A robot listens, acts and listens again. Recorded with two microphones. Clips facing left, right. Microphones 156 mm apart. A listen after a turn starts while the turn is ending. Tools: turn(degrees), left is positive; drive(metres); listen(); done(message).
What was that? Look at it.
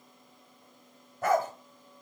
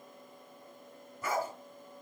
turn(degrees=70)
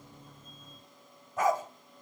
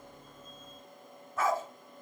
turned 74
turn(degrees=15)
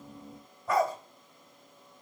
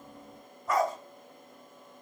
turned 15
done("Facing the dog barking, 1 to 2 m away.")